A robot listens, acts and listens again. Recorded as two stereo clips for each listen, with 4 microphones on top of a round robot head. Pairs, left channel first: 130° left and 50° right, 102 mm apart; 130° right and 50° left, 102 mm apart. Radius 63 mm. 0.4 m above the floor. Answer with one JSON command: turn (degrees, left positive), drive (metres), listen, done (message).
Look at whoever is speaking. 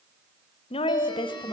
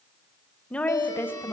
{"turn": 160}
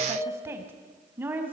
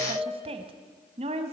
{"turn": 25}
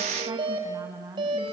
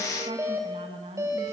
{"turn": 15}
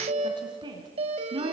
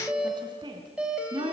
{"done": "Facing the woman speaking."}